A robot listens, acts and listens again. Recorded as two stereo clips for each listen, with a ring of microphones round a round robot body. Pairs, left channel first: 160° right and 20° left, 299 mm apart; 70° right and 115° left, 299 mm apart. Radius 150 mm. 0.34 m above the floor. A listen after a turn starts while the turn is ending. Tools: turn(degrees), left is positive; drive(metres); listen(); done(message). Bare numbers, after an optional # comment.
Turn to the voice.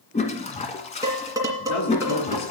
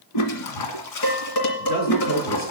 # The man speaking: 125° right.
turn(-125)
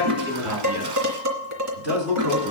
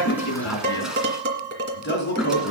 # The man speaking is now 15° right.
turn(-15)
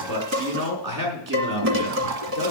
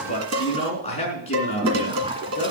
done("Facing the man speaking.")